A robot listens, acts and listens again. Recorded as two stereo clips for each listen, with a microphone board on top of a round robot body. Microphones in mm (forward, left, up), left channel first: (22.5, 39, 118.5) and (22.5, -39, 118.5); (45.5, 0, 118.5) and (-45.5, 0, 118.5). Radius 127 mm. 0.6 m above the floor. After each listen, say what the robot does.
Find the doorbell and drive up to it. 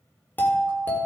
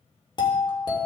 Turn 25° left.
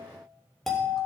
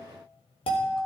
Drive 1.0 m forward.
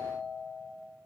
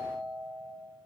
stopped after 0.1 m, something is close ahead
Blocked. The doorbell is further on, straight ahead.